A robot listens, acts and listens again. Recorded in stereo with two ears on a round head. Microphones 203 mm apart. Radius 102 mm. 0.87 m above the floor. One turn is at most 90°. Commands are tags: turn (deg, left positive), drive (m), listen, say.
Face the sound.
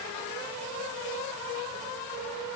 <listen/>
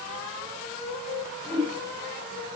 <turn deg="-30"/>
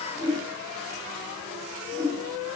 <turn deg="20"/>
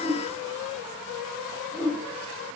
<say>Found it: a whoosh, straight ahead, over 4 m away.</say>